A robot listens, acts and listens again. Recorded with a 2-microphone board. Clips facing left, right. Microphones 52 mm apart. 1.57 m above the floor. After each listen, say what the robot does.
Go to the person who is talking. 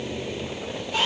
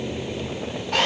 Keep listening.
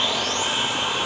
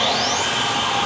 Keep listening.
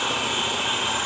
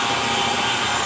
I can't make out anyone speaking, only sawing.